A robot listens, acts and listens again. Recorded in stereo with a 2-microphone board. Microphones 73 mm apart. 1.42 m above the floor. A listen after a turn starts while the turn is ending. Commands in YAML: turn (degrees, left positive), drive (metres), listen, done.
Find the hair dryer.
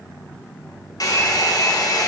turn: 55
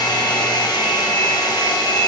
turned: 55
turn: 75
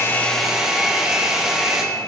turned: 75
done: "Facing the hair dryer."